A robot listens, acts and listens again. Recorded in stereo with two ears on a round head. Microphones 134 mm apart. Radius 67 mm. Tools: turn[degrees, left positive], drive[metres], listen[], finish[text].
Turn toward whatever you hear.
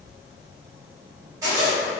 Thought: The zipper: about 20° right or 160° right.
Action: turn[-20]
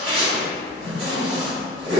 Thought: So it is at 135° right.
Action: turn[-135]
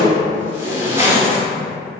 Thought: The zipper is now 25° right.
Action: turn[-25]
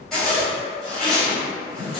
Action: finish[Found it: a zipper, straight ahead.]